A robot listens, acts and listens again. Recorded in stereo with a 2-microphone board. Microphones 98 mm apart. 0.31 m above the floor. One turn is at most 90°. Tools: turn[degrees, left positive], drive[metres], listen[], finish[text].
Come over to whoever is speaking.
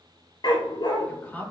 Thought: The woman speaking: about 15° left or 165° left.
Action: turn[15]
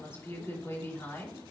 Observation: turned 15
Thought: So it is at 150° left.
Action: turn[90]
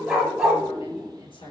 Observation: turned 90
Thought: Nothing new. It was at 60° left.
Action: turn[60]
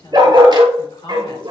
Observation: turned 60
Thought: The woman speaking is now 60° left.
Action: turn[60]
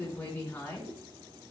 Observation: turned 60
Thought: The woman speaking is now 20° left.
Action: turn[20]
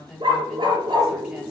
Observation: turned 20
Action: drive[1.0]
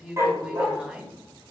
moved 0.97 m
Thought: The woman speaking is now 15° right.
Action: turn[-15]
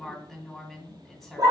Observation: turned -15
Action: drive[1.0]
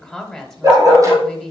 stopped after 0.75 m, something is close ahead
Action: finish[Arrived at the woman speaking, straight ahead.]